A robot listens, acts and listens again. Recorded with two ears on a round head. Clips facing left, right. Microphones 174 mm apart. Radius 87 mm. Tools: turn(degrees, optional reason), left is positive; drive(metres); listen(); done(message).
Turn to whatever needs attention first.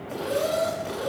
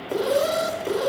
turn(degrees=-60, reason="The alarm: about 60° right or 120° right.")
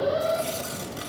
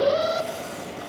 turn(degrees=-60, reason="So it is at 60° right.")
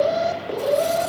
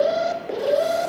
done("Found it: an alarm, straight ahead, 1 to 2 m away.")